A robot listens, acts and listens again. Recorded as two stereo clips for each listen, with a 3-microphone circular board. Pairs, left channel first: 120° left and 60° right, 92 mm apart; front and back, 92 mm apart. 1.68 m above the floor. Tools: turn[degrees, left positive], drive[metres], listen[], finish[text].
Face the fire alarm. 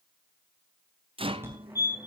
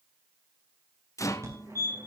Thought: The fire alarm: 125° right.
Action: turn[-125]
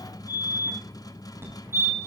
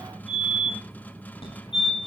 Action: finish[Facing the fire alarm, over 4 m away.]